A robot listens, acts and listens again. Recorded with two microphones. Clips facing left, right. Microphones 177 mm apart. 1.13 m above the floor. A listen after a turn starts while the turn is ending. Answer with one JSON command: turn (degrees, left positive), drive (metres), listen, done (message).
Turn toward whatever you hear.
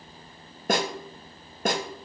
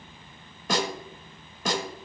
{"turn": 55}
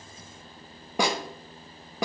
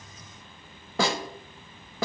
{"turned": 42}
{"turn": 15}
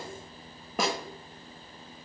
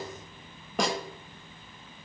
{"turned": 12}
{"done": "Found it: a snare drum, straight ahead, under 1 m away."}